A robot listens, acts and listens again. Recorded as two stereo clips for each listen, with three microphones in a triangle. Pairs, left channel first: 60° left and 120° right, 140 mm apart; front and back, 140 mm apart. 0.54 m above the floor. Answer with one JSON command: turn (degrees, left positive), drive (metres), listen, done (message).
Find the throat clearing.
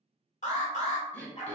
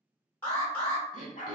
{"turn": -20}
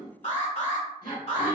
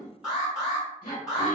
{"done": "Found it: throat clearing, straight ahead."}